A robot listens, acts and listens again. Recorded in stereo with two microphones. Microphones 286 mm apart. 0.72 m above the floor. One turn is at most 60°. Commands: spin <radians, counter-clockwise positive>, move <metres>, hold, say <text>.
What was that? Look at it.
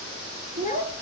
spin 0.52
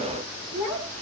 spin 1.05
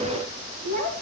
spin 1.05
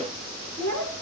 say Found it: a child speaking, straight ahead.